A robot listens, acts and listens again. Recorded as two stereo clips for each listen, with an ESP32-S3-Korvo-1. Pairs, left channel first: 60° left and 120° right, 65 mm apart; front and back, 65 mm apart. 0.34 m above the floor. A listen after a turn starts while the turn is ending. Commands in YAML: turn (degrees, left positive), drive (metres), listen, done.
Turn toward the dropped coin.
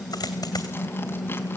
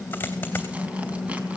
turn: 60
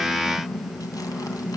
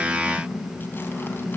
done: "I heard a dropped coin from this way, but can't make it out now."